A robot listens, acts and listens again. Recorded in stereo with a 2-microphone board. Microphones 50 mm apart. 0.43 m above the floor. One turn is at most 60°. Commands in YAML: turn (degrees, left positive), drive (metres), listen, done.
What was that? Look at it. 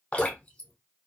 turn: 25
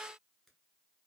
listen: true
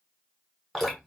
done: "Found it: dripping, straight ahead, 1 to 2 m away."